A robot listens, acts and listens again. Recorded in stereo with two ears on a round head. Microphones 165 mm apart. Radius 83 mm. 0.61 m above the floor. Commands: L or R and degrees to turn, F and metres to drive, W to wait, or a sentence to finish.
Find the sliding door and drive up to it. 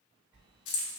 R30
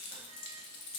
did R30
W
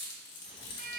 R140
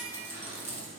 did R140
R40
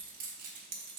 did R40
W
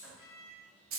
F1.0
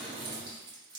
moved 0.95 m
F1.0
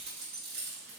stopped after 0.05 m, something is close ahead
W
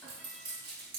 W
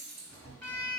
I am next to the sliding door.